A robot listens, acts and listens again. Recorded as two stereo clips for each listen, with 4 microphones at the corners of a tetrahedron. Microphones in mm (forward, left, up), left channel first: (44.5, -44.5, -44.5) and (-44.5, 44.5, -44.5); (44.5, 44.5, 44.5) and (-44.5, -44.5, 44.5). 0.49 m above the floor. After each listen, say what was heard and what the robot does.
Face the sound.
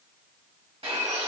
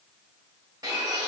The bird: 170° left. Turn 170° left.
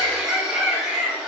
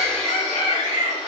The bird is now 50° left. Turn 50° left.
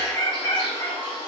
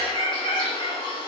Found it: a bird, straight ahead.